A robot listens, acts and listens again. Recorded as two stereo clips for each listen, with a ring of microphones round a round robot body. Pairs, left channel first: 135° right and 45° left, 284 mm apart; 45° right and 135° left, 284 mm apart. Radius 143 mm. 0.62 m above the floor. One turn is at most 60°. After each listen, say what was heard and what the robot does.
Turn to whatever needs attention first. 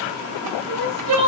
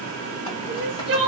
The crying: 80° left. Turn 60° left.
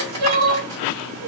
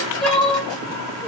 The crying is now 45° left. Turn 45° left.
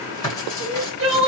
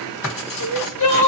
Found it: crying, straight ahead, under 1 m away.